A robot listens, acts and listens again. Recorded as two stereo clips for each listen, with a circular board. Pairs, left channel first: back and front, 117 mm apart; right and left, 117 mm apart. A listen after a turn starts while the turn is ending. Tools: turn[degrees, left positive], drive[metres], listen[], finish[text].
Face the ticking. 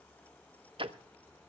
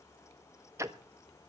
Thought: The ticking: 30° left.
Action: turn[30]
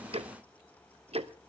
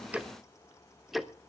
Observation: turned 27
Action: finish[Facing the ticking, under 1 m away.]